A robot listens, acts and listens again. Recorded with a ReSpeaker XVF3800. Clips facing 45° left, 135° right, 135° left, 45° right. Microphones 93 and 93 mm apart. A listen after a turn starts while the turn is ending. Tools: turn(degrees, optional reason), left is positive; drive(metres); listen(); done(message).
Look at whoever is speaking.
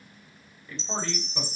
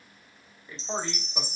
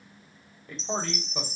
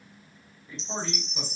turn(degrees=155, reason="The man speaking: 155° left.")
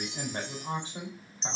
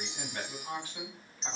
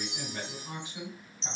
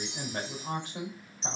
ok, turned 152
turn(degrees=-15, reason="The man speaking is now 15° right.")
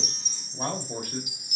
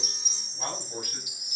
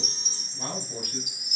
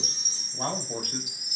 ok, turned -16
turn(degrees=-10, reason="The man speaking is now 10° right.")
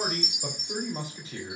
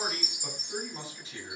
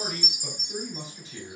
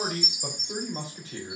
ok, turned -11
done("Facing the man speaking, over 4 m away.")